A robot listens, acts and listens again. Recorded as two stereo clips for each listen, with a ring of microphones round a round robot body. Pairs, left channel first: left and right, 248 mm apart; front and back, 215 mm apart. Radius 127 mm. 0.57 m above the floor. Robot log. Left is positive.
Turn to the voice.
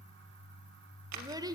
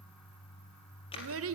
note: The child speaking: 165° right.
cmd yaw -165
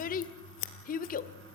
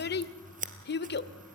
note: The child speaking is now 35° left.
cmd yaw +35
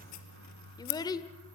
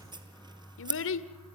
note: The child speaking is now 15° left.
cmd yaw +15
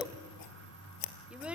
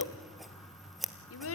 end: Facing the child speaking.